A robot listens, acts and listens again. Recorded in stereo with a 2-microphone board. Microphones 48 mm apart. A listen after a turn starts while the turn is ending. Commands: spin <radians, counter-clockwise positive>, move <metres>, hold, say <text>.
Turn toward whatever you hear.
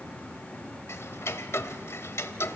spin 1.13
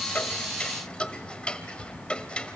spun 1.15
spin 0.35
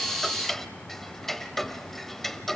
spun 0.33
say Facing the ticking.